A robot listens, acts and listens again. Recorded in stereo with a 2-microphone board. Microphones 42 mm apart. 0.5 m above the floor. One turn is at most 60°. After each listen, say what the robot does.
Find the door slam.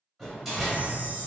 Turn 30° left.
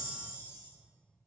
Keep listening.
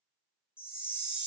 I heard a door slam, but can't make it out now. It was about 30° right or 150° left.